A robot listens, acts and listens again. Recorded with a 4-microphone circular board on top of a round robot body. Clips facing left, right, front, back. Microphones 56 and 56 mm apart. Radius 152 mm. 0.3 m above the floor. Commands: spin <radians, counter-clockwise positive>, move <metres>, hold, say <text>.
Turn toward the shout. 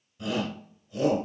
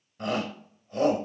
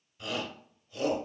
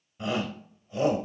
spin -2.09
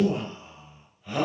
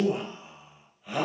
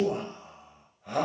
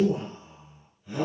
say Found it: a shout, straight ahead, 2 to 4 m away.